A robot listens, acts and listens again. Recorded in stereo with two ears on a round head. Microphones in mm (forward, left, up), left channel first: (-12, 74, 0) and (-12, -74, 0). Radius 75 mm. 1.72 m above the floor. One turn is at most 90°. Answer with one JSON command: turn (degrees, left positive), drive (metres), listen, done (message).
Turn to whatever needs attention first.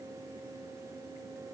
{"listen": true}
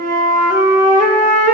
{"listen": true}
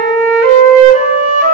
{"done": "I can't make out anything urgent to turn to."}